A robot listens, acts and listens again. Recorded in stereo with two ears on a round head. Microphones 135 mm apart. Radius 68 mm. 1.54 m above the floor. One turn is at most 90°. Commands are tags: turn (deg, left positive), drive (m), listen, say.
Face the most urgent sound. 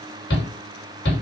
<turn deg="90"/>
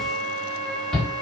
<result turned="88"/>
<say>Facing the shout.</say>